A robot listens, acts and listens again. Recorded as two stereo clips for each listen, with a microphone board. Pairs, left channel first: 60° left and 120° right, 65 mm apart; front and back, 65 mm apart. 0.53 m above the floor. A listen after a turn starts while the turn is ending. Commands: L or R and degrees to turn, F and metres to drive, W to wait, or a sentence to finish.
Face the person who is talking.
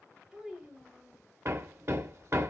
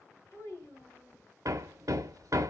R40
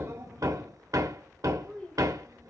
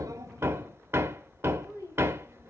R10
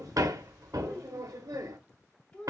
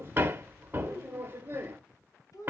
Facing the child speaking, 2 to 4 m away.